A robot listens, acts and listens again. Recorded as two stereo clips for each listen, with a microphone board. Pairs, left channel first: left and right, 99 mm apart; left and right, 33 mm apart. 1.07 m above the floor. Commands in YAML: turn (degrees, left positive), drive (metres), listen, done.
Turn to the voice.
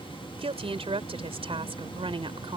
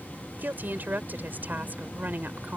turn: -60
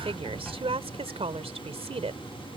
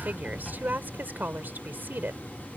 turn: -75
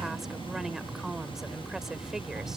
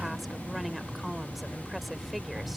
listen: true
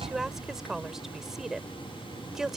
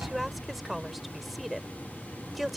done: "Found it: a woman speaking, straight ahead."